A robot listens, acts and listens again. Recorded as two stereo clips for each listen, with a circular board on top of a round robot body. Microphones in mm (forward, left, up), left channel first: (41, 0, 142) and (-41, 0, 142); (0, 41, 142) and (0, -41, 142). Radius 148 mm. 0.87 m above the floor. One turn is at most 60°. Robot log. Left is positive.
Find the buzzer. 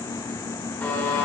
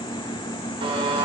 note: The buzzer: 70° right.
cmd yaw -60
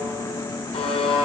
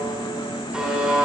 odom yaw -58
note: The buzzer is now 10° right.
cmd yaw -10
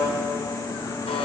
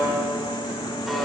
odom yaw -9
end: Facing the buzzer.